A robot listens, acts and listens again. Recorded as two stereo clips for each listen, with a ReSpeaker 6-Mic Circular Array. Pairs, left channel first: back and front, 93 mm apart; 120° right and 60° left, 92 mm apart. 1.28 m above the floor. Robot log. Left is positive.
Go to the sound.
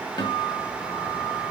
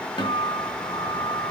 note: The guitar: 155° right.
cmd yaw -155
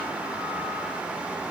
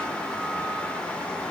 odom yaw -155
cmd idle
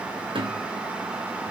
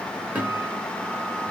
note: The guitar is now 15° right.
cmd yaw -15
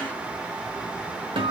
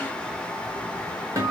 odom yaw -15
cmd fwd 1.0
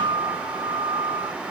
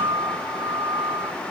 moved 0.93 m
cmd fwd 1.0
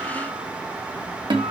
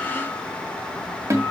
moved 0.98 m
note: The guitar is now 10° left.
cmd yaw +10
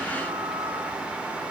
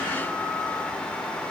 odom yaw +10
cmd idle
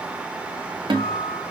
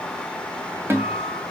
cmd fwd 1.0
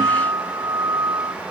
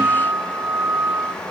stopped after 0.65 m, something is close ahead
note: The guitar is now 10° left.
cmd yaw +10
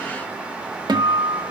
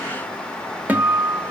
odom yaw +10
end: I am next to the guitar.